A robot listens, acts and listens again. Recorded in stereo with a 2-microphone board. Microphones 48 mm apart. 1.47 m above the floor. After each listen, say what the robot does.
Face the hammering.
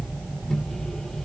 Keep listening.
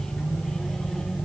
Keep listening.
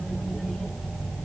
I can't make out hammering, only a microwave.